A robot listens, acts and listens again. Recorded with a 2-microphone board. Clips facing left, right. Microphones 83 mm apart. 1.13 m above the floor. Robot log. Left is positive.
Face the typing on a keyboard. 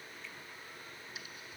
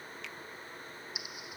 cmd yaw -30
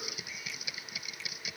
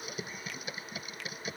note: So it is at 140° right.
cmd yaw -140
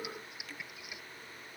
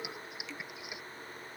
note: The typing on a keyboard is now 20° right.
cmd yaw -20
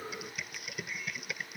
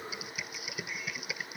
end: Facing the typing on a keyboard.